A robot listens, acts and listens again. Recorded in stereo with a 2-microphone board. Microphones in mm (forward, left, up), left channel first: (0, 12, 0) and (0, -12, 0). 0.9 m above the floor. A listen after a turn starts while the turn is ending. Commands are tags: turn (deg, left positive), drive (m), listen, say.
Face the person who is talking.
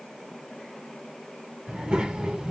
<turn deg="-40"/>
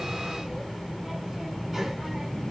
<say>Found it: a child speaking, straight ahead.</say>